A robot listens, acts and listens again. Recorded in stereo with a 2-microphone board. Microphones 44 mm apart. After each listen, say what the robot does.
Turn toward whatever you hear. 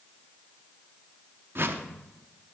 Turn 60° right.
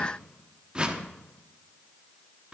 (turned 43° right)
Turn 25° right.
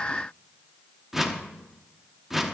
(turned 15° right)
Turn 10° right.
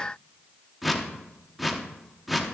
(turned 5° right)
Facing the whoosh.